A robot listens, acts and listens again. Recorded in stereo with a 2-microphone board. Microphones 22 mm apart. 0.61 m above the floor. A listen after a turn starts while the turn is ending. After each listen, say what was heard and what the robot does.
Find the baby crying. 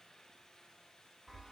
Keep listening.
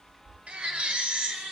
The baby crying: about 70° right or 110° right. Turn 70° right.
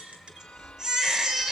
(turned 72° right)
So it is at 35° right. Turn 35° right.
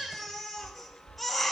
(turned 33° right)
Found it: a baby crying, straight ahead, 1 to 2 m away.